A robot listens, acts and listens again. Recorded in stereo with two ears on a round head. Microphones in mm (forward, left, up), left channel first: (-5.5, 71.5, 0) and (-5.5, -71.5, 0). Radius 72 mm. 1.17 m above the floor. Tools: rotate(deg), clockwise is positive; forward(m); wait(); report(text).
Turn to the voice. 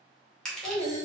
rotate(-30)
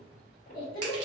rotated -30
rotate(-120)
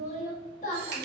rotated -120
rotate(-45)
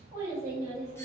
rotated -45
rotate(20)
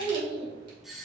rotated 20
report("Found it: a child speaking, straight ahead.")